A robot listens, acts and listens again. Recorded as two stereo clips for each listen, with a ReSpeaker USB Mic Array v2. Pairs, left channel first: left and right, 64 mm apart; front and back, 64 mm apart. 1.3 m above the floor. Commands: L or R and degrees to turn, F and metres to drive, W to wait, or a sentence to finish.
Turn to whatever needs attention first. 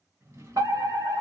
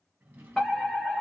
R85
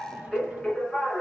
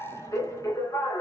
L10
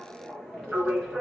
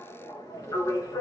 Facing the fire alarm.